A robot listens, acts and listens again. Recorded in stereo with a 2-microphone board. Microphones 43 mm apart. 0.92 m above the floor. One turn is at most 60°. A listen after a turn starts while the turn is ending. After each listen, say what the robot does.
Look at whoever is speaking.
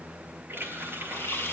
Keep listening.
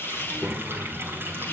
Turn 25° right.
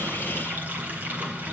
Keep listening.
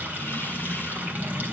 Turn 10° right.
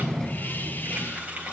Facing the child speaking.